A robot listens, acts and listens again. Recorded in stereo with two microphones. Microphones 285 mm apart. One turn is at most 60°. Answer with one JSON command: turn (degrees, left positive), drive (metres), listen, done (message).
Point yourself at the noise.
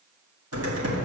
{"turn": -55}
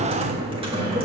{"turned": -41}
{"turn": -20}
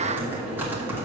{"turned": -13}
{"done": "Facing the typing on a keyboard, 1 to 2 m away."}